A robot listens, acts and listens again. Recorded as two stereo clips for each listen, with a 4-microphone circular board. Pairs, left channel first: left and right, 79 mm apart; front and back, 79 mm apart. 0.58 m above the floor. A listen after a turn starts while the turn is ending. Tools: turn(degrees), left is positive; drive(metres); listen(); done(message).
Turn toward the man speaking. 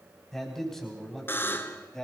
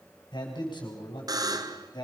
done("Facing the man speaking, over 4 m away.")